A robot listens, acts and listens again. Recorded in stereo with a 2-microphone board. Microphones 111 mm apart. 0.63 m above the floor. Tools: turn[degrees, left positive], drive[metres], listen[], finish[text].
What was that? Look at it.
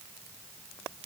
Action: listen[]
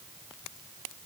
Action: listen[]
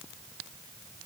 Action: finish[I can't make out anything to turn to.]